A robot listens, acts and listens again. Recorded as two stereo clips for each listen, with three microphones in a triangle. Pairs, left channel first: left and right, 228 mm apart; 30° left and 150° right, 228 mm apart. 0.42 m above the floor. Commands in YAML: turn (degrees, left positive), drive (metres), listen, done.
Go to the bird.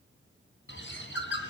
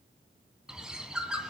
turn: 125
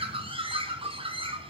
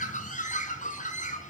turn: -25
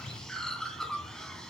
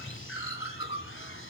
drive: 1.0
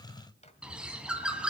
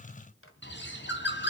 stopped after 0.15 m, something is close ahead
done: "Blocked. The bird is further on, straight ahead."